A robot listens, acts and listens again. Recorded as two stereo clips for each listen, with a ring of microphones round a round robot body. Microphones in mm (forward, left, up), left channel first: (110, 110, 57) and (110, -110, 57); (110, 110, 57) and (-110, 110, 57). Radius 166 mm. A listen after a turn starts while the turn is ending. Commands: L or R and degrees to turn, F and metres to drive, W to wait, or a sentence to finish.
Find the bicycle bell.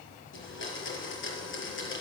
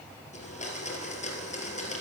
W
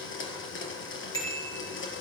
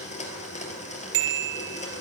L170
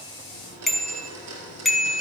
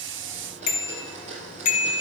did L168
Found it: a bicycle bell, straight ahead, 2 to 4 m away.